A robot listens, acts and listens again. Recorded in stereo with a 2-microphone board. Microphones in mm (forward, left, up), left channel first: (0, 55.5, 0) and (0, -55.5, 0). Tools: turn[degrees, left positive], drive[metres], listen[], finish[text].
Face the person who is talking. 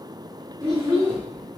Thought: The child speaking: about 40° right or 140° right.
Action: turn[-40]
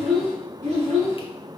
Thought: So it is at 95° right.
Action: turn[-95]
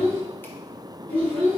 Thought: The child speaking is now 20° left.
Action: turn[20]
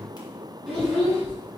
Action: finish[Facing the child speaking.]